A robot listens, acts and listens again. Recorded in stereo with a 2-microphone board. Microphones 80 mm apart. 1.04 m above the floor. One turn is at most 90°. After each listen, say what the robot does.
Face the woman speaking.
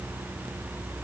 Keep listening.
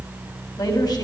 Keep listening.
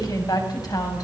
Turn 55° left.
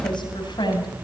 Turn 70° left.
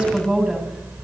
Turn 10° right.
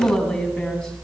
Found it: a woman speaking, straight ahead, over 4 m away.